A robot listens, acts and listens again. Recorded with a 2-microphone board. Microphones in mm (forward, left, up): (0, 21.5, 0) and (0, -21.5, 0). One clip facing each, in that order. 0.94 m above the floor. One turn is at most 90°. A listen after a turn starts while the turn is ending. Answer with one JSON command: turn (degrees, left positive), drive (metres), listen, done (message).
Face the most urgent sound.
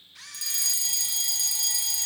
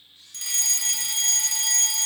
{"turn": -50}
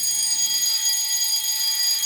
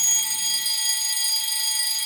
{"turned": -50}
{"turn": -10}
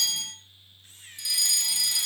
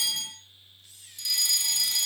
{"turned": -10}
{"done": "Facing the fire alarm, 2 to 4 m away."}